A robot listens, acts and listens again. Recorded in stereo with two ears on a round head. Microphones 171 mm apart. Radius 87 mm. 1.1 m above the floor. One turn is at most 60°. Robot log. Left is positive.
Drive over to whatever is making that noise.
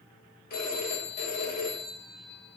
note: The phone ringing: about 55° left or 125° left.
cmd yaw +55
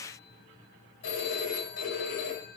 note: So it is at 75° left.
cmd yaw +60
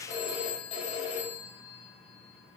note: The phone ringing is now 35° left.
cmd yaw +35
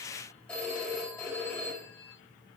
cmd fwd 1.0
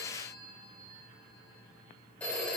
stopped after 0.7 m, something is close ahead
note: The phone ringing is now 10° left.
cmd yaw +10
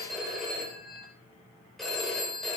end: Something is in my way. I am facing the phone ringing but have not reached it.